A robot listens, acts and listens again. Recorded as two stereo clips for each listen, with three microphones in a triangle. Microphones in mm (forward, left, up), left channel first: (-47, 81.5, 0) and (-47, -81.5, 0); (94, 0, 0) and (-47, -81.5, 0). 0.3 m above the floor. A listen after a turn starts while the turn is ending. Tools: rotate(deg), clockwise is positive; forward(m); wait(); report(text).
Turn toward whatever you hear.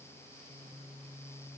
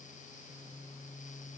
wait()
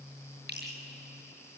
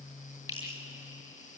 rotate(80)
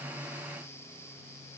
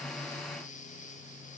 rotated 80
wait()
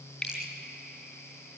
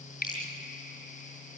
report("Found it: dripping, straight ahead, over 4 m away.")